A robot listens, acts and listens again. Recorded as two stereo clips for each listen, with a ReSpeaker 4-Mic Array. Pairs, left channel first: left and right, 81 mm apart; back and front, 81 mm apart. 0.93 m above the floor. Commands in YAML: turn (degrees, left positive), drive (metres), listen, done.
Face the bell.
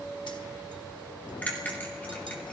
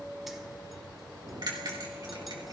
turn: 20
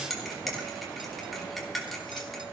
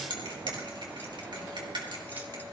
done: "Found it: a bell, straight ahead."